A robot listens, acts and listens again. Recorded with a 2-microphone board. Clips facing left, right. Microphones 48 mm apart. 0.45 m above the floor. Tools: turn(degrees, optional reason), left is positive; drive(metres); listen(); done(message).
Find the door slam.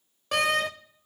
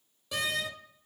turn(degrees=55, reason="The door slam: about 55° left or 125° left.")
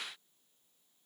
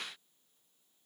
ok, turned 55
listen()
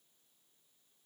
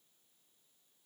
done("I heard a door slam, but can't make it out now. It was about straight ahead or 70° left.")